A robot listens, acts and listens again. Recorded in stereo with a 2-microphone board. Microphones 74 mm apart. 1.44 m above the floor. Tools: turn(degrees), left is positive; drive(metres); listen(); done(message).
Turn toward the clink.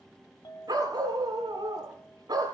turn(degrees=70)
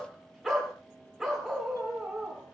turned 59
listen()
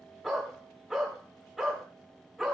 listen()
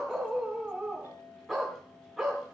turn(degrees=50)
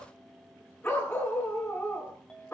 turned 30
turn(degrees=15)
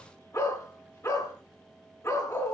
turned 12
listen()
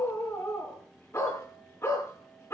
listen()
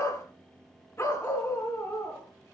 done("I heard a clink from this way, but can't make it out now.")